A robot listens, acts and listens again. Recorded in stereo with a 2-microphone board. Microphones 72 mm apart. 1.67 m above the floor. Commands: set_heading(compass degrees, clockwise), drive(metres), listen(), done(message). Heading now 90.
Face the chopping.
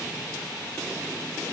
listen()
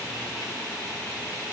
listen()
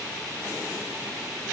done("I can't make out chopping.")